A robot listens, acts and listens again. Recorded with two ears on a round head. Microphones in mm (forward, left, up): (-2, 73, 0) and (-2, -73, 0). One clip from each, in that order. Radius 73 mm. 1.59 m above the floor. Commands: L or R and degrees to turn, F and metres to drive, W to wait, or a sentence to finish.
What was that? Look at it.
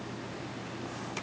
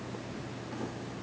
W
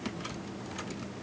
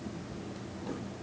W
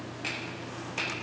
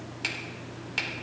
R70
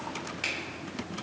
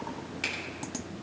Facing the finger snap, 2 to 4 m away.